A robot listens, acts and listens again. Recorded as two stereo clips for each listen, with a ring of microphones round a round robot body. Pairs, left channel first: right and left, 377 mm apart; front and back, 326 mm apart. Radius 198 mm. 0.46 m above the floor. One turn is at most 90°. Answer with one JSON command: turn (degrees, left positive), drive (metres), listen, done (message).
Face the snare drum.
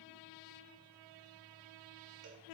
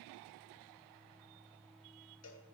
{"listen": true}
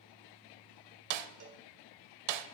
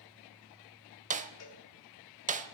{"turn": 90}
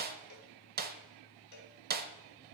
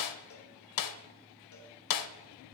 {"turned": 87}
{"turn": 25}
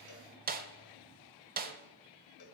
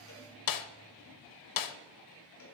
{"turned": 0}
{"turn": 20}
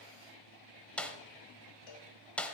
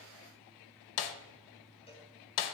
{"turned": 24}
{"done": "Found it: a snare drum, straight ahead."}